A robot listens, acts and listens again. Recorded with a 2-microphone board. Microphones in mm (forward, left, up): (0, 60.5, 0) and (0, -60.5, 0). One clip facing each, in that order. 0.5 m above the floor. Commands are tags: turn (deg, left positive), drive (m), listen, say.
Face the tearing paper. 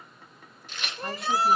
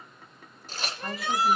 <turn deg="-40"/>
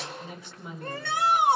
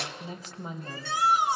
<listen/>
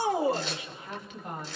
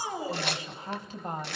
<turn deg="-105"/>
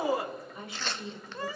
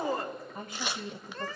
<turn deg="-15"/>
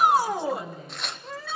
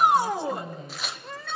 <say>Facing the tearing paper.</say>